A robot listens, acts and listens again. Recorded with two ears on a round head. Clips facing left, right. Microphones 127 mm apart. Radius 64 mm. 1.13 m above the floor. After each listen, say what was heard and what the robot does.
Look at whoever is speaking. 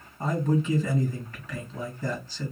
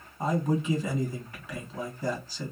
Turn 30° right.
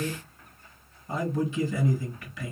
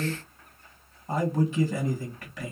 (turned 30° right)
So it is at 140° right. Turn 140° right.
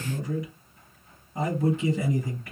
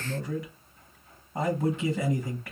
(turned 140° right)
The man speaking is now 55° right. Turn 55° right.
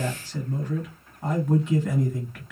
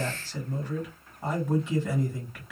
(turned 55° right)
The man speaking is now 10° right. Turn 10° right.
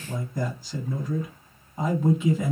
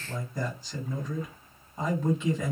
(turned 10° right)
Found it: a man speaking, straight ahead.